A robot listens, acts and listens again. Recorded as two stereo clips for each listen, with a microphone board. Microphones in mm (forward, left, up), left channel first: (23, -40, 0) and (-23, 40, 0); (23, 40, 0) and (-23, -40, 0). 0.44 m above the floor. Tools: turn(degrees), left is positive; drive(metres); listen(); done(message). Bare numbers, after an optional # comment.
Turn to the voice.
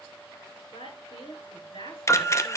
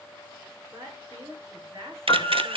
# The woman speaking: 60° right.
turn(-60)
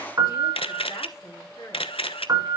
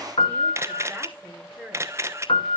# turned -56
# The woman speaking is now 10° right.
turn(-10)
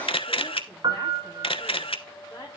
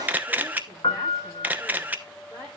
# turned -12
listen()
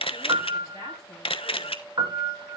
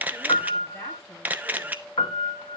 listen()
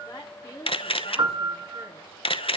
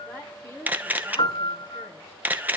done("Found it: a woman speaking, straight ahead, over 4 m away.")